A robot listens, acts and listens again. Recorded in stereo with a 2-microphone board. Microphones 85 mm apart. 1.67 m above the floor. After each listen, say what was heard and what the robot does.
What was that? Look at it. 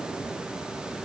Keep listening.
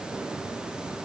Keep listening.
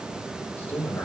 The man speaking: about 25° left or 155° left. Turn 25° left.
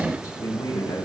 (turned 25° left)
So it is at 135° left. Turn 135° left.
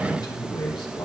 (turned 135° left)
The man speaking is now 55° left. Turn 55° left.
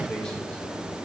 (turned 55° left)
The man speaking is now 10° left. Turn 10° left.
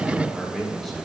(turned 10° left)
Found it: a man speaking, straight ahead, 2 to 4 m away.